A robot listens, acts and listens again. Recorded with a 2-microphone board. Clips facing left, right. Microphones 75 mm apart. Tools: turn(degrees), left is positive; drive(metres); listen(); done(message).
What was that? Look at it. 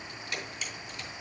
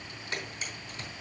turn(degrees=-35)
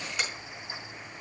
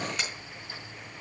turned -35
done("Found it: a camera shutter, straight ahead, over 4 m away.")